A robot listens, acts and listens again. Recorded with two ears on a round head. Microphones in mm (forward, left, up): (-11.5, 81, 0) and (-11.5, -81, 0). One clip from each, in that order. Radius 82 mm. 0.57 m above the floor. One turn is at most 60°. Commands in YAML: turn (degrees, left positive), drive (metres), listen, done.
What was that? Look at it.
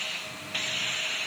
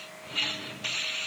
listen: true
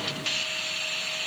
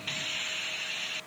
listen: true
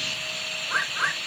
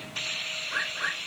turn: 25
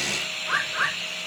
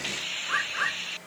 done: "Found it: a bird, straight ahead."